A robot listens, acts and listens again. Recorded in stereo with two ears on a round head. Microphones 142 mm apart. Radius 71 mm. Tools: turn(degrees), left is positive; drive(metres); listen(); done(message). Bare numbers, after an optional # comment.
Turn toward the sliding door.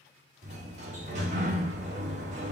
# The sliding door: about 45° right or 135° right.
turn(-45)
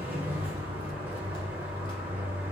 # So it is at 10° right.
turn(-10)
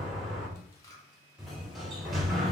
done("Found it: a sliding door, straight ahead.")